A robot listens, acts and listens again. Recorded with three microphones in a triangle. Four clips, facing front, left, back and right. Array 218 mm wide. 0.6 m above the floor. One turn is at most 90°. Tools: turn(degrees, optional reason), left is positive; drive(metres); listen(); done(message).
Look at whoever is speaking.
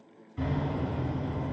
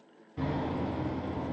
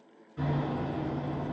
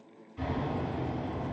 listen()
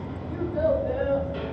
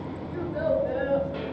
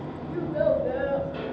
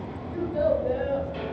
turn(degrees=-90, reason="The child speaking: 165° right.")
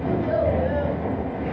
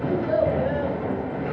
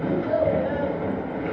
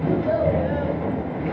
turn(degrees=-70, reason="The child speaking is now 70° right.")
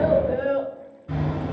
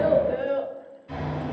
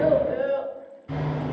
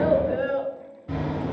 turn(degrees=15, reason="The child speaking is now 15° left.")
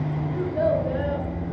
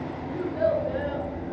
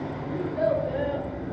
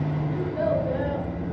done("Found it: a child speaking, straight ahead.")